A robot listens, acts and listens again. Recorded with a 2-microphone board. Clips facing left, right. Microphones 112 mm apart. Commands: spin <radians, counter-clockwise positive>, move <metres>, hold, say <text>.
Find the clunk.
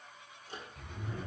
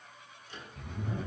hold
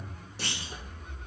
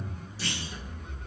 spin 1.22
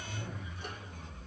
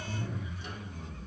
hold
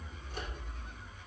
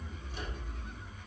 say I heard a clunk, but can't make it out now. It was about straight ahead or 40° left.